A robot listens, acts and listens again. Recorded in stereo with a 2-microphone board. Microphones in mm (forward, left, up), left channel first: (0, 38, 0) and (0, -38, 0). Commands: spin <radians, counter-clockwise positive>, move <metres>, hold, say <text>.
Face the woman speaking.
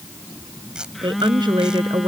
spin -1.57
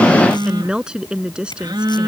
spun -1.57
spin -0.26
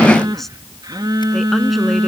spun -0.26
hold
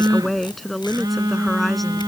say Facing the woman speaking.